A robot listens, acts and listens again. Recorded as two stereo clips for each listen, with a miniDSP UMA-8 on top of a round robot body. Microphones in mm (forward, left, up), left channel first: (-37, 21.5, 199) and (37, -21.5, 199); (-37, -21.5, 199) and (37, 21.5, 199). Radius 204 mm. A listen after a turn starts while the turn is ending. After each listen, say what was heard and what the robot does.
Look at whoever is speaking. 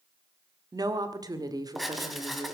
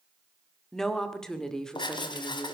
The woman speaking: 70° right. Turn 70° right.
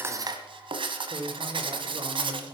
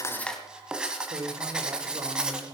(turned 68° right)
Found it: a woman speaking, straight ahead, 2 to 4 m away.